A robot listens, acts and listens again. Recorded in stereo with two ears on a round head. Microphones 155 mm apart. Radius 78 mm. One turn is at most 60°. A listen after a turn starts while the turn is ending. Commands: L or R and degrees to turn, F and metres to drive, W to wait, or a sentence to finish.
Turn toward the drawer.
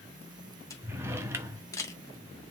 R15
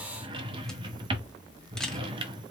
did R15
R60
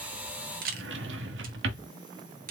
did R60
R60
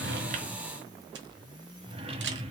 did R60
R35
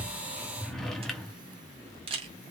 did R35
Found it: a drawer, straight ahead, 1 to 2 m away.